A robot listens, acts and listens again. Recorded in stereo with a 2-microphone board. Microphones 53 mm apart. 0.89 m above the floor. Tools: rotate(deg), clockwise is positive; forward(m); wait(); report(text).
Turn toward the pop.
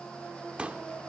rotate(25)
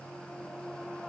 wait()
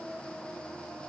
report("I heard a pop, but can't make it out now. It was about straight ahead or 130° right.")